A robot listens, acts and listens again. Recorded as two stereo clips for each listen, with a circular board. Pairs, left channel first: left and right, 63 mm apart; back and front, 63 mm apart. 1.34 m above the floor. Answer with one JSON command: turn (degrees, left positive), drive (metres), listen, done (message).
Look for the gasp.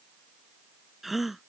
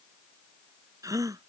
{"done": "Facing the gasp."}